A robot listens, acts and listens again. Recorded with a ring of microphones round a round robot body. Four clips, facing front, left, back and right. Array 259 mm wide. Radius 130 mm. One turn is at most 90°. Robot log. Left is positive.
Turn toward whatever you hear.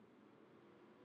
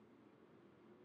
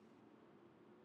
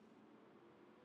cmd idle
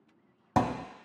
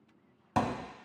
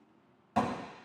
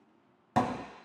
note: The thud: 15° right.
cmd yaw -15
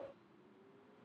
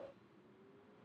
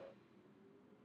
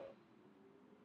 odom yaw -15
end: I heard a thud from this way, but can't make it out now.